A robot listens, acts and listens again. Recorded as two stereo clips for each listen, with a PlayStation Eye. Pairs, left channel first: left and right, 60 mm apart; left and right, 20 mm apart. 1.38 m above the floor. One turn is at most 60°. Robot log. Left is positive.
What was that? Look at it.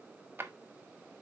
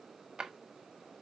note: The drawer: about 35° right or 145° right.
cmd yaw -35
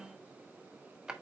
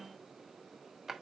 note: So it is at 10° right.
cmd yaw -10
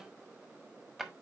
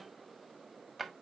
end: Found it: a drawer, straight ahead, 1 to 2 m away.